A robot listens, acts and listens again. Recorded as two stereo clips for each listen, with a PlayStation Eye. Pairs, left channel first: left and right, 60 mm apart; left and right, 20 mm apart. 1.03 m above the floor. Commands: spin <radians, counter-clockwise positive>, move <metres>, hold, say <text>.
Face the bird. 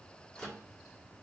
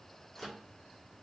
hold
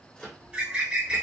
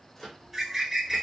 spin -0.52
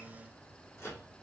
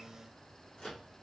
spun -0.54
hold
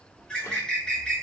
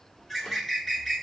spin 0.26
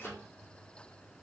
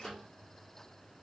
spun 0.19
hold
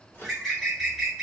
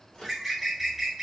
say Found it: a bird, straight ahead.